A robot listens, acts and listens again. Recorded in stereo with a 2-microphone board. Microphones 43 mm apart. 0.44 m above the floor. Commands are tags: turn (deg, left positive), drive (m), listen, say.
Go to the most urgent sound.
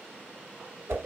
<listen/>
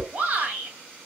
<turn deg="-35"/>
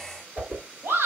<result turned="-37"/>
<turn deg="-110"/>
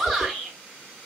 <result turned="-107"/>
<drive m="1.0"/>
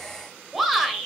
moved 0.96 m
<drive m="1.0"/>
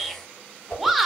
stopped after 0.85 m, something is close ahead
<say>Arrived at the shout, straight ahead.</say>